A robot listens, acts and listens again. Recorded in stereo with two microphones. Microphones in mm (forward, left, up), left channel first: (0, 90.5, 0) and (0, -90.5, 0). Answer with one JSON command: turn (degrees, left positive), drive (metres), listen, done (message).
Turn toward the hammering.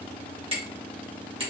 {"turn": -30}
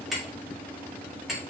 {"done": "Facing the hammering."}